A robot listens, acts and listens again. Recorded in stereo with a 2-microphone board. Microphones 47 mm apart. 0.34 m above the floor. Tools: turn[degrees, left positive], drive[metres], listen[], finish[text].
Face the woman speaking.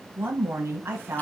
Thought: The woman speaking: about 55° right or 125° right.
Action: turn[-55]
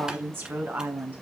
Thought: So it is at 50° right.
Action: turn[-50]
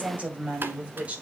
Thought: The woman speaking is now 30° right.
Action: turn[-30]
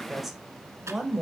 Thought: The woman speaking is now 10° right.
Action: turn[-10]
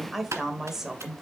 Thought: The woman speaking is now 10° right.
Action: turn[-10]
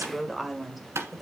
Action: finish[Facing the woman speaking.]